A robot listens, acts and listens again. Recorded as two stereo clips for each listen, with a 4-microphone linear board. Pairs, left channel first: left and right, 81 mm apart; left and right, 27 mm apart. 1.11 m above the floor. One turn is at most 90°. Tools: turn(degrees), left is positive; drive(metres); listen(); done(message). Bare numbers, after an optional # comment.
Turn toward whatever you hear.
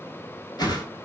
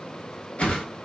# The whoosh: about 55° left or 125° left.
turn(55)
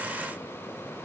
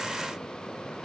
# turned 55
listen()
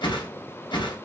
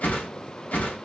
# So it is at 70° left.
turn(70)
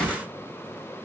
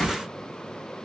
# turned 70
# The whoosh is now 10° left.
turn(10)
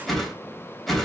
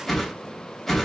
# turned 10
done("Facing the whoosh.")